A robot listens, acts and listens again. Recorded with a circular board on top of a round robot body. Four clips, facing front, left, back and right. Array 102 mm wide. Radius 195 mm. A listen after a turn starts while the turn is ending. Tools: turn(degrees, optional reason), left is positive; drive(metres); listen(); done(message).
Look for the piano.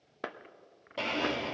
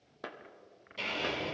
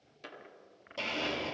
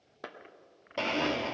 listen()
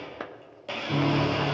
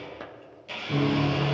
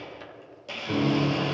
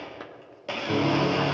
turn(degrees=-130, reason="The piano: 130° right.")
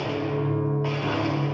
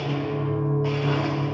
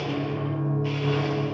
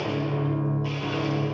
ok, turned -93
turn(degrees=-35, reason="The piano is now 35° right.")
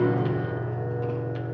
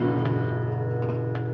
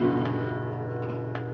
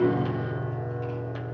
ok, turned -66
turn(degrees=30, reason="The piano is now 30° left.")
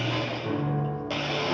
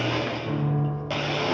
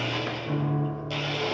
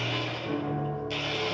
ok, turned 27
done("Facing the piano, 2 to 4 m away.")